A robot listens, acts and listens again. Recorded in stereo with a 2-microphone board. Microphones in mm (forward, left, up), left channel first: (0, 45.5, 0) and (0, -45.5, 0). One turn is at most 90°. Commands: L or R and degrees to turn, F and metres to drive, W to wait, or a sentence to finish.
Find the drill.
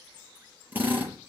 R20
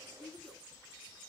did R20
W
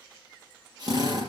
R90
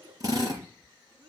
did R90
R40
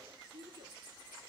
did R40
W
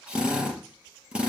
R10
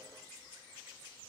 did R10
W
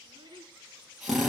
Facing the drill, over 4 m away.